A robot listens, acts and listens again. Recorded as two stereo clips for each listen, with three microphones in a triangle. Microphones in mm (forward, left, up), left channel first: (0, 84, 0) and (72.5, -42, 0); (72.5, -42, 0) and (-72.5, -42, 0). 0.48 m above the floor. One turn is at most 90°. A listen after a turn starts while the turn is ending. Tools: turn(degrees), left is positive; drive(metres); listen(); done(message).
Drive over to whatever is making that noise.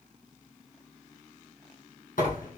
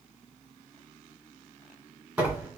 turn(degrees=90)
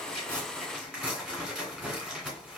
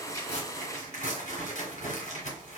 turn(degrees=25)
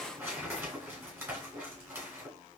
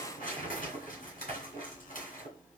turn(degrees=15)
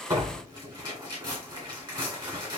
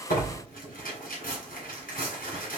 drive(metres=1.0)
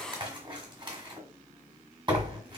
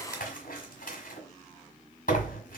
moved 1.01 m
drive(metres=1.0)
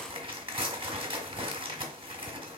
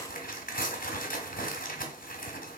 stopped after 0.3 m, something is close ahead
done("Arrived at the tearing paper, straight ahead.")